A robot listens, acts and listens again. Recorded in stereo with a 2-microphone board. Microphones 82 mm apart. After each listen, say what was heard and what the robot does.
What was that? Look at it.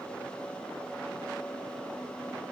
Keep listening.
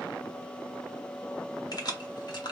The keys jangling: about 65° left or 115° left. Turn 65° left.
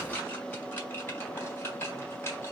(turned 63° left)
So it is at 35° left. Turn 35° left.
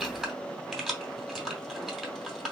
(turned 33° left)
Facing the keys jangling.